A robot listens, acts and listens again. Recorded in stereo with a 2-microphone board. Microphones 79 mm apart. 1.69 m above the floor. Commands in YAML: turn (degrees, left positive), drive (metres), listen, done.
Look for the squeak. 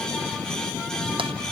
listen: true
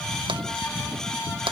listen: true
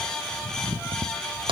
done: "I can't make out a squeak to turn to."